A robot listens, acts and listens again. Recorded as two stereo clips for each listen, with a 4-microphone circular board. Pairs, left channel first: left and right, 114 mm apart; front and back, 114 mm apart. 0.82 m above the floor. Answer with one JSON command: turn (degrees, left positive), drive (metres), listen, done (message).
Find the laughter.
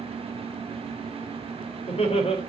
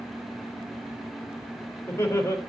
{"turn": 65}
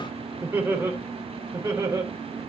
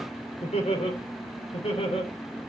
{"turn": -30}
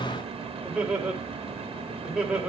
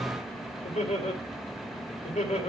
{"done": "Facing the laughter."}